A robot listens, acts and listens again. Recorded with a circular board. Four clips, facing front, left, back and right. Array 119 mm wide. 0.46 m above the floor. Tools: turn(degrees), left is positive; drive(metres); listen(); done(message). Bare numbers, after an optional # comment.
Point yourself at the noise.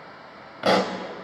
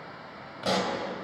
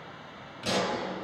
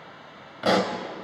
# The pop: 25° right.
turn(-25)
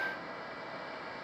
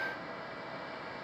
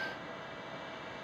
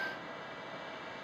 done("Facing where the pop came from. I can't hear it now.")